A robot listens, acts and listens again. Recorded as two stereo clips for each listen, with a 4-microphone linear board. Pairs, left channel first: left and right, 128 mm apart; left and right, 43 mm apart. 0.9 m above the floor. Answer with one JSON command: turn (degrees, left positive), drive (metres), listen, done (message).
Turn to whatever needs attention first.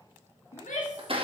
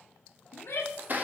{"turn": 70}
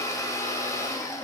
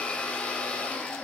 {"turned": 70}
{"listen": true}
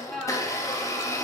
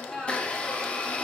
{"done": "Found it: a shout, straight ahead."}